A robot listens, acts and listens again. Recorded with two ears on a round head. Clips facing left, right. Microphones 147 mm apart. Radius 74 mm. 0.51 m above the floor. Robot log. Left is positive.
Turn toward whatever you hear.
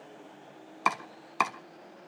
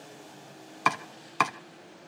cmd yaw +30
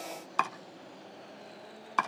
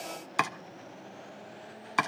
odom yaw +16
note: So it is at 15° right.
cmd yaw -15
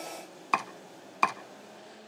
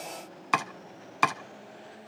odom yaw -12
end: Found it: chopping, straight ahead.